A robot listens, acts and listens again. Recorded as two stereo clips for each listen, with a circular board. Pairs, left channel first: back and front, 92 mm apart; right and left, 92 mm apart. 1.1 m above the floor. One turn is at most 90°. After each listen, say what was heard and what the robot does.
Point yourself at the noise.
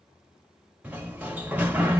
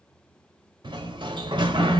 The sliding door: 70° left. Turn 70° left.
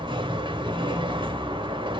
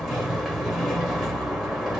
Facing the sliding door.